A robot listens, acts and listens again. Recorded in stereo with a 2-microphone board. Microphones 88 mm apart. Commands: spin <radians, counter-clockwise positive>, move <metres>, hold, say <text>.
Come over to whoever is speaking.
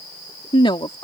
spin 1.57
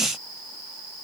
hold
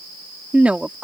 spin -0.26
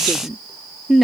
move 1.0
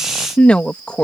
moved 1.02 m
spin 0.26
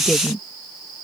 move 1.0
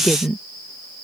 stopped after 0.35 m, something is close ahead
say Arrived at the woman speaking, straight ahead.